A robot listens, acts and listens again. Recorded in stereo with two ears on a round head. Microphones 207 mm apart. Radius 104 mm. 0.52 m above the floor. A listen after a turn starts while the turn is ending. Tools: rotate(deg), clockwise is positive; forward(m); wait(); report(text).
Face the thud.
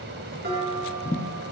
rotate(-25)
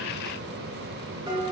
wait()
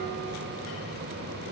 report("I heard a thud, but can't make it out now. It was about straight ahead or 130° left.")